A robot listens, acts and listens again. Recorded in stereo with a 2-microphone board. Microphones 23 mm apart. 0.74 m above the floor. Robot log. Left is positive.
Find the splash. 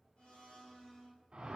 cmd idle
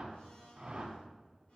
cmd idle
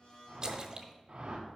note: The splash: about 30° right or 150° right.
cmd yaw -30
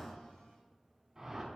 cmd idle
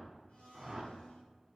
end: I heard a splash, but can't make it out now. It was about straight ahead or 120° right.